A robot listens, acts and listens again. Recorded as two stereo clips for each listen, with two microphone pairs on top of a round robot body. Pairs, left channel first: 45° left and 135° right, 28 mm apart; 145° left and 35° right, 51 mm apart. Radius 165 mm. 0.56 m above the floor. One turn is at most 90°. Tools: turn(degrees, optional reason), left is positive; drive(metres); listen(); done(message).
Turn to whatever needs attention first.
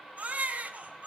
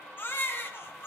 turn(degrees=-90, reason="The baby crying: 170° right.")
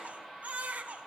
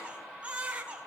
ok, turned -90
turn(degrees=-90, reason="The baby crying is now 105° right.")
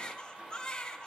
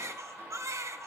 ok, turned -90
turn(degrees=-20, reason="The baby crying is now 20° right.")
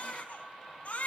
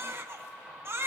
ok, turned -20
done("Facing the baby crying, over 4 m away.")